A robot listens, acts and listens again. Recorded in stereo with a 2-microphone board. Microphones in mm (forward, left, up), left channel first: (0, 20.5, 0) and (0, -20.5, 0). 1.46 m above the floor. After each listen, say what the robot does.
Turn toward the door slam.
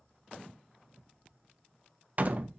Turn 40° right.
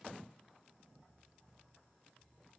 Keep listening.
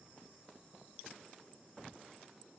I heard a door slam, but can't make it out now. It was about straight ahead or 100° right.